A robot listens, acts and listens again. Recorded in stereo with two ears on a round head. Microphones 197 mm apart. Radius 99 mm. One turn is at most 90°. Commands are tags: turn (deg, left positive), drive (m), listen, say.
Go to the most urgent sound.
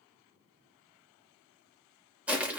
<listen/>
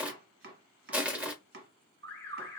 <turn deg="30"/>
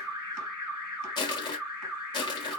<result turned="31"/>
<turn deg="-20"/>
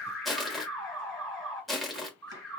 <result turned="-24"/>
<drive m="1.0"/>
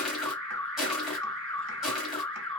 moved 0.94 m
<drive m="1.0"/>
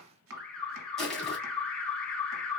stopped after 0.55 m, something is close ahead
<turn deg="10"/>
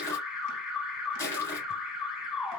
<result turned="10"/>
<say>I am next to the alarm.</say>